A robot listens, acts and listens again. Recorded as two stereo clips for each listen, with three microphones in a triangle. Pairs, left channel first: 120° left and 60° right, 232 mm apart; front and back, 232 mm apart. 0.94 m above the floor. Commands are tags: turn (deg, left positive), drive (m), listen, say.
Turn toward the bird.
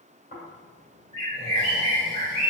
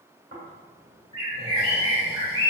<turn deg="-120"/>
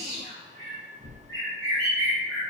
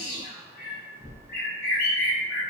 <turn deg="-45"/>
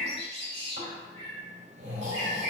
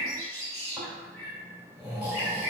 <turn deg="-20"/>
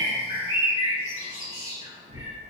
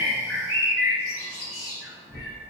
<say>Found it: a bird, straight ahead.</say>